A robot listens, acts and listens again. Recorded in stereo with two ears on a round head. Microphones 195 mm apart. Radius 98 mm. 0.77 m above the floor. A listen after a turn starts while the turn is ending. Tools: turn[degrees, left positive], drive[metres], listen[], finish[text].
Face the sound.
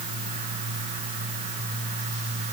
Action: listen[]
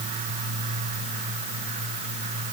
Action: listen[]
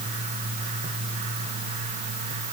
Action: finish[I can't make out anything to turn to.]